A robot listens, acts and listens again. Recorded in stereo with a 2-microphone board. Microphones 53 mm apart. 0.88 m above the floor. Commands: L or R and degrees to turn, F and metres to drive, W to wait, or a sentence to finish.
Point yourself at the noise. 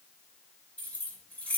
L30
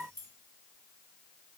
W
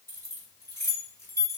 L120
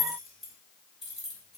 Found it: keys jangling, straight ahead, 1 to 2 m away.